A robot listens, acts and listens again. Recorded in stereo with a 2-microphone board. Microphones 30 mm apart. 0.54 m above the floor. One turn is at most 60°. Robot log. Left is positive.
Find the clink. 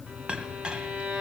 note: The clink: about 30° right or 150° right.
cmd yaw -30
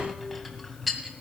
end: Facing the clink.